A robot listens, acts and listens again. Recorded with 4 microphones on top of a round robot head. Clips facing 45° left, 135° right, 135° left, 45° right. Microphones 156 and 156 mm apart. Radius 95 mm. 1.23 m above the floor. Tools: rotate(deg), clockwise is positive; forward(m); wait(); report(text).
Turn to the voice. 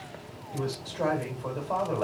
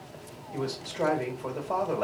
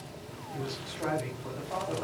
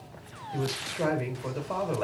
rotate(60)
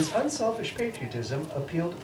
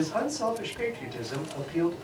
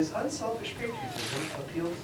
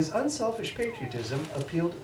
rotate(15)
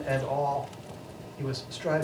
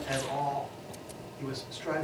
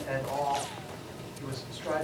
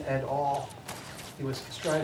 report("Facing the man speaking.")